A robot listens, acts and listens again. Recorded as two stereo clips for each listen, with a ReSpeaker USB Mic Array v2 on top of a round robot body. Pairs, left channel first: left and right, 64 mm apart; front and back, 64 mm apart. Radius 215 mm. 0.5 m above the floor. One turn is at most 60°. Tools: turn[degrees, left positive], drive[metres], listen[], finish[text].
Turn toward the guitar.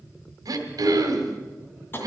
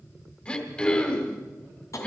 Action: listen[]
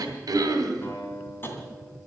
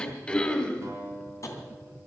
Thought: The guitar: 145° left.
Action: turn[60]
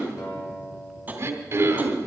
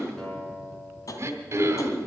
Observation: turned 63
Thought: The guitar is now 80° left.
Action: turn[60]
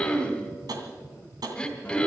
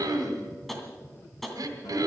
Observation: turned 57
Thought: Nothing new. It was at 25° left.
Action: turn[25]
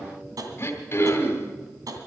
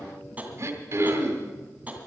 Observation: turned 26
Action: listen[]
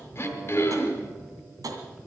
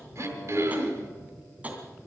Action: finish[Facing where the guitar came from. I can't hear it now.]